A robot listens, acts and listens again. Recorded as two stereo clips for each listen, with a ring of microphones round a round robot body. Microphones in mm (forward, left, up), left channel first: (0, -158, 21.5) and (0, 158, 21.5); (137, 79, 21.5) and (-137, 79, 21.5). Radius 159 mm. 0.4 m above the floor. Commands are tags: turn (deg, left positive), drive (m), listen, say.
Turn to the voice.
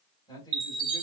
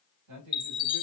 <turn deg="-165"/>
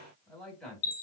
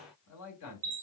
<say>Facing the man speaking.</say>